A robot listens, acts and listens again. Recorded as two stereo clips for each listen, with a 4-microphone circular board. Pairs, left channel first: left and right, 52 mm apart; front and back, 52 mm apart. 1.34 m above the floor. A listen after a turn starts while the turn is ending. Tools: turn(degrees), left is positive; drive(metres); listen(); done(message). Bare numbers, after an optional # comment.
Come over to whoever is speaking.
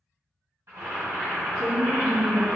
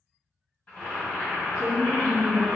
# The woman speaking: 25° right.
turn(-25)
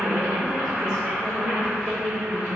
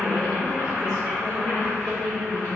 drive(1.0)
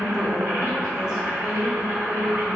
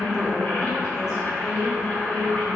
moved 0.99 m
# The woman speaking is now 10° right.
turn(-10)
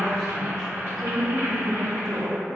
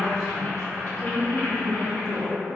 drive(1.0)
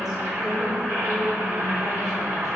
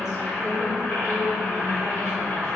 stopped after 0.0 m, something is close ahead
listen()
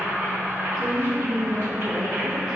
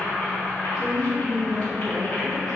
done("I am next to the woman speaking.")